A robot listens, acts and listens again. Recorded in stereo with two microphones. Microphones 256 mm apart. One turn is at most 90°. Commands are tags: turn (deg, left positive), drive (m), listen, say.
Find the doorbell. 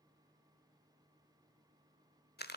<listen/>
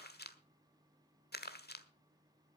<listen/>
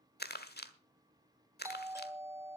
<turn deg="-30"/>
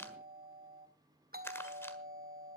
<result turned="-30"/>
<turn deg="-90"/>
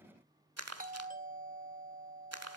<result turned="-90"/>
<turn deg="-40"/>
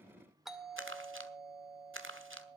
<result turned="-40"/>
<say>Facing the doorbell.</say>